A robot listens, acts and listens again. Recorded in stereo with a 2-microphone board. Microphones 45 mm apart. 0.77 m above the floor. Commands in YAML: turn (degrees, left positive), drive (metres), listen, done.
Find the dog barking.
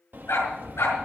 turn: 90
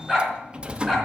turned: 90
done: "Facing the dog barking, 2 to 4 m away."